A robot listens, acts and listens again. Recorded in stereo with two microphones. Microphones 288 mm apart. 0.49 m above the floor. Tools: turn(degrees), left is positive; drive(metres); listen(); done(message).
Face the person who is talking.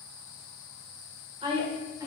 turn(degrees=-30)
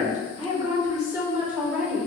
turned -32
turn(degrees=30)
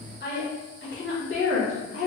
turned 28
turn(degrees=130)
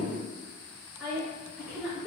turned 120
done("Found it: a woman speaking, straight ahead.")